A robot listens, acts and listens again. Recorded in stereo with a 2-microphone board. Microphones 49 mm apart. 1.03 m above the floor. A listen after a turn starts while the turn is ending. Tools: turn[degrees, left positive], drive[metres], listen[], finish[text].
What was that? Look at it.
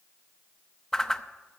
Action: turn[30]
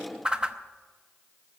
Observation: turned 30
Thought: So it is at 15° right.
Action: turn[-15]
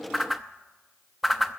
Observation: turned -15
Action: finish[Facing the whoosh.]